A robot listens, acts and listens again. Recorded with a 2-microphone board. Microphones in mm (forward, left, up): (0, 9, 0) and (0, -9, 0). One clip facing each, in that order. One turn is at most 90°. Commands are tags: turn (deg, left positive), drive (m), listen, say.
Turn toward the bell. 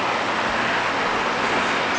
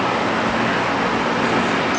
<turn deg="-40"/>
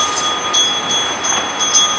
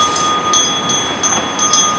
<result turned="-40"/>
<turn deg="-90"/>
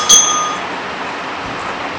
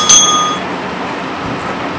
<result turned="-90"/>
<turn deg="-25"/>
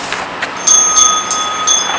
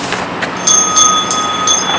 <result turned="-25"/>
<say>Facing the bell, under 1 m away.</say>